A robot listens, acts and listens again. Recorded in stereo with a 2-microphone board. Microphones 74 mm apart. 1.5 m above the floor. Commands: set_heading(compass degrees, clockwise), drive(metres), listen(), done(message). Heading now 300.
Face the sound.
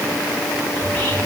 set_heading(280)
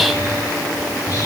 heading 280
set_heading(140)
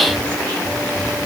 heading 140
set_heading(115)
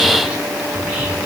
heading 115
set_heading(130)
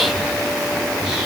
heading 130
done("Found it: whispering, straight ahead, 1 to 2 m away.")